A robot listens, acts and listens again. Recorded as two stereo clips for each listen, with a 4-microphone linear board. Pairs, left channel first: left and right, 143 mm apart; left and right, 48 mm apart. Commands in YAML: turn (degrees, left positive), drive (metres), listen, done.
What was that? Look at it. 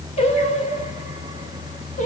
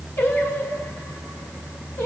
turn: 60
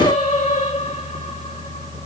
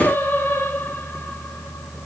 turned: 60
turn: 50
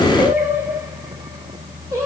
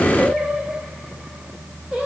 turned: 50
turn: -20
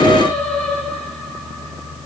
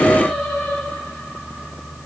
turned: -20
done: "Facing the singing, over 4 m away."